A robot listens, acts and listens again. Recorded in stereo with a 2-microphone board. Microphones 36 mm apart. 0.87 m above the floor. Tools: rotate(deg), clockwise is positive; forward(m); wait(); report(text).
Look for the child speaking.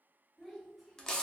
rotate(-30)
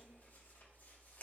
wait()
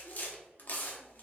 wait()
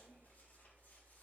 report("I heard a child speaking, but can't make it out now. It was about 30° right or 150° left.")